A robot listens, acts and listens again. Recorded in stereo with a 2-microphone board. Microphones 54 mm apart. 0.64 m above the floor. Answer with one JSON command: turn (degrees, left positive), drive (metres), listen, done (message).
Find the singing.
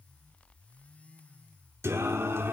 {"turn": -50}
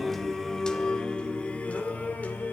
{"turn": 35}
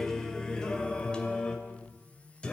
{"turn": 20}
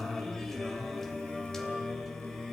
{"done": "Found it: singing, straight ahead."}